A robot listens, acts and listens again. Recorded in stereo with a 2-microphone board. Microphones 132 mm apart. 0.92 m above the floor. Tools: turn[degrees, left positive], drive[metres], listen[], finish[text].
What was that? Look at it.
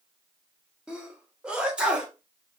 Action: turn[-30]
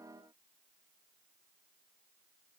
Action: listen[]
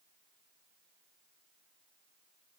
Action: finish[I heard a sneeze, but can't make it out now. It was about 20° left or 140° right.]